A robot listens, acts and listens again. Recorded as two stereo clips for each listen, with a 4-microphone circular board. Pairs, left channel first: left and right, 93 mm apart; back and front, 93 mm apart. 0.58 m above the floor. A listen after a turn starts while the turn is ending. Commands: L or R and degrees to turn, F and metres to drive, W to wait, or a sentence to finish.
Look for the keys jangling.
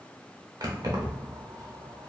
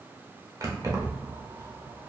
R50
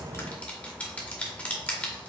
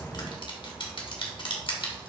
W
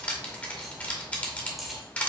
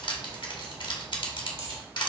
Found it: keys jangling, straight ahead.